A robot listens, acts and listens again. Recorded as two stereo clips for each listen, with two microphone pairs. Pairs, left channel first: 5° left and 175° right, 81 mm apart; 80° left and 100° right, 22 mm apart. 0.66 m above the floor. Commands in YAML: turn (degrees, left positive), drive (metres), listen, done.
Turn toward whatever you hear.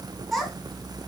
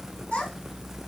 turn: 90
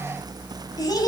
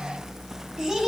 turn: -35
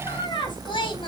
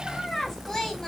turn: 10
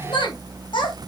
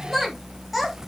turn: -10
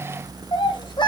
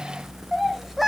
turn: -15
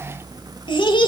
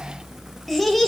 done: "Found it: a child speaking, straight ahead, 1 to 2 m away."